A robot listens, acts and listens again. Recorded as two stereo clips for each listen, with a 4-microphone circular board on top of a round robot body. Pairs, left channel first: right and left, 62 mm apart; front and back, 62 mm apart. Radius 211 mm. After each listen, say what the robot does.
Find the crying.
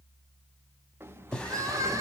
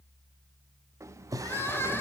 Turn 55° left.
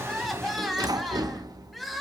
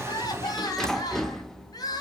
Found it: crying, straight ahead, 1 to 2 m away.